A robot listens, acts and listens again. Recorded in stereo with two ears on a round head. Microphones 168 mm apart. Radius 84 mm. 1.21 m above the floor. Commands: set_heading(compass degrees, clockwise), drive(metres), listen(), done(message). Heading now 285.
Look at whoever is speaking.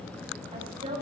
set_heading(315)
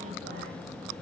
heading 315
listen()
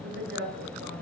set_heading(75)
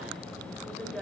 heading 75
done("Facing the woman speaking, over 4 m away.")